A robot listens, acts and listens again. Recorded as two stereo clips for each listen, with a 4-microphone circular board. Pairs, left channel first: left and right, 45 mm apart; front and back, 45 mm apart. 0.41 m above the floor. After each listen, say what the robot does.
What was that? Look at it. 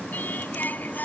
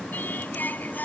Turn 45° left.
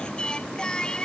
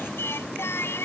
Turn 20° left.
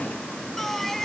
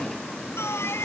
Found it: singing, straight ahead.